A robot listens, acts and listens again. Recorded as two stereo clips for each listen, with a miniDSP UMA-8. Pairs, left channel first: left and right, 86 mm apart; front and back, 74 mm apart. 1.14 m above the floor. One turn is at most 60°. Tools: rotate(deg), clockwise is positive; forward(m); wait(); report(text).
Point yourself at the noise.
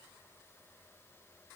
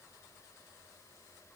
wait()
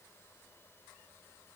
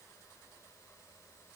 wait()
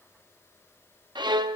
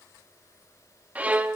rotate(60)
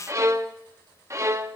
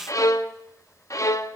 rotate(40)
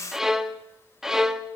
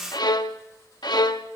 report("Found it: a violin, straight ahead.")